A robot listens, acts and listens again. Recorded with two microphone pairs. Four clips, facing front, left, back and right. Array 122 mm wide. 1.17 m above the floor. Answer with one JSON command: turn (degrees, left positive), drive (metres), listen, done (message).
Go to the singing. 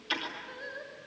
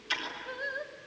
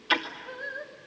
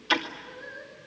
{"turn": 110}
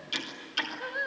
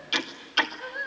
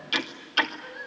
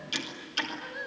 {"turn": 25}
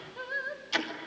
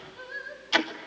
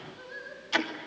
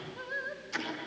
{"turn": -15}
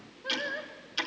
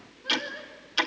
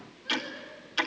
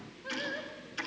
{"drive": 1.0}
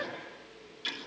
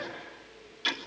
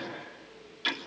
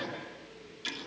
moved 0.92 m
{"listen": true}
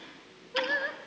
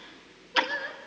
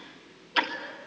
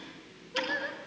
{"drive": 1.0}
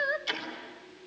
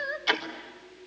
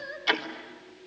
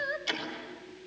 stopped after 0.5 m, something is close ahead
{"done": "I am next to the singing."}